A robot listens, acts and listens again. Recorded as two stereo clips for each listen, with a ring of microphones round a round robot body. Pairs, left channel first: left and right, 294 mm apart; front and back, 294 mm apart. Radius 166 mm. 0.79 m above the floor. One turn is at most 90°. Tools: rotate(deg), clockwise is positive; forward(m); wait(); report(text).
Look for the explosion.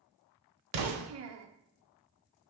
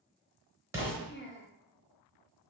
rotate(90)
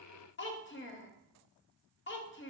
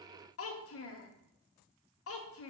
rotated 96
report("I heard an explosion from this way, but can't make it out now.")